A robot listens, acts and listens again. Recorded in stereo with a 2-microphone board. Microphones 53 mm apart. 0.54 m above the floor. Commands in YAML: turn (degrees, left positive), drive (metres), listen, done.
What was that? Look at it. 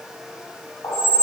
turn: 65
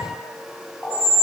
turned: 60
turn: 15
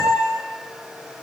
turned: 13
done: "Found it: a squeak, straight ahead."